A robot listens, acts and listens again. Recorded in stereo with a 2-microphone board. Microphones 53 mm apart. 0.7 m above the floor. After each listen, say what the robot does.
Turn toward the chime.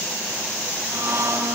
Keep listening.
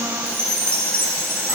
Turn 55° right.
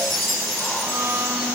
Found it: a chime, straight ahead, over 4 m away.